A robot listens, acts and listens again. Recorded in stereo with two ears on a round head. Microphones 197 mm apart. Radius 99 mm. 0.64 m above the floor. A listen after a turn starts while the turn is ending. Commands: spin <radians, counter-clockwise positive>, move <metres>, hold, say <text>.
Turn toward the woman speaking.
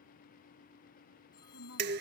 spin 1.13
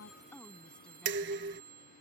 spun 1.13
hold
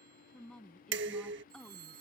say Facing the woman speaking.